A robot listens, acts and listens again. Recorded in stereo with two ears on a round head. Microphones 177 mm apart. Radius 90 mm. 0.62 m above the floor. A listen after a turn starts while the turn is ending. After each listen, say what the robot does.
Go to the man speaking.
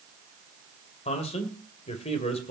Turn 30° left.
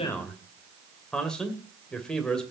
Drive 1.0 m forward.
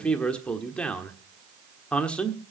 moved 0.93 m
Drive 1.0 m forward.
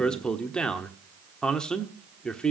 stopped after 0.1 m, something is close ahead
Arrived at the man speaking, straight ahead.